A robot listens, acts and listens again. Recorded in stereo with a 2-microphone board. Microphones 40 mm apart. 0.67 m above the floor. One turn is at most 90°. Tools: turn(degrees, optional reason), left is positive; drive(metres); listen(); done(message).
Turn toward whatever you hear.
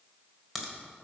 turn(degrees=-30)
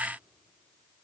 listen()
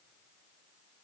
done("I heard a crack, but can't make it out now. It was about 25° left or 145° right.")